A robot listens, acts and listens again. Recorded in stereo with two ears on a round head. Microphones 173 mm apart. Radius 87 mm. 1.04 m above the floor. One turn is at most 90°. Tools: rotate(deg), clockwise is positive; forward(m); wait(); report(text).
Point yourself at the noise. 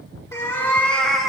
rotate(-30)
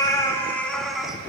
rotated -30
rotate(-30)
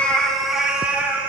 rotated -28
rotate(30)
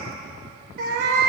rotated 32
rotate(90)
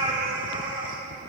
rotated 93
rotate(25)
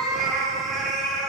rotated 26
report("Facing the cat meowing, 2 to 4 m away.")